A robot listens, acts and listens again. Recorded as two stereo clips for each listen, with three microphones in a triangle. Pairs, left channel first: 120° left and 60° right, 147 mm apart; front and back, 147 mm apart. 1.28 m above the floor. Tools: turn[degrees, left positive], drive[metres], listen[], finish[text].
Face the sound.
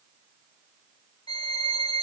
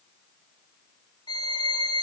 Thought: The violin: 60° left.
Action: turn[60]
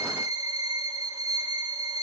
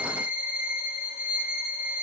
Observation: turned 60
Action: finish[Found it: a violin, straight ahead.]